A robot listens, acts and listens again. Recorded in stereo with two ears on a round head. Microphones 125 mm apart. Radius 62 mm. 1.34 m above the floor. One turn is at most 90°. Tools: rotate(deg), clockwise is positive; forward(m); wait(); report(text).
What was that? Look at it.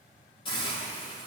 rotate(-40)
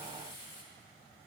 rotate(-90)
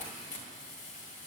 rotate(-55)
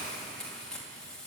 report("Facing the hiss.")